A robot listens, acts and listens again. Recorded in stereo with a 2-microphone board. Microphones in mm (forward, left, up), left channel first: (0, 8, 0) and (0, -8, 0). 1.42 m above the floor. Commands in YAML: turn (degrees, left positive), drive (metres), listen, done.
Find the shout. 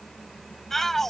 turn: 20
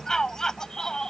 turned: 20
turn: 140
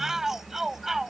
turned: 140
turn: -30
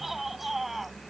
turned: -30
turn: -15
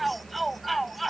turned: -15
done: "Facing the shout."